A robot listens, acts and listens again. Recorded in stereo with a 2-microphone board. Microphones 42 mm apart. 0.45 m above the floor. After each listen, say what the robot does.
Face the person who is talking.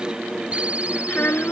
Turn 55° left.
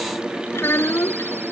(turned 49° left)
Turn 75° left.
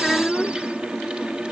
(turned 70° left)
Found it: a child speaking, straight ahead.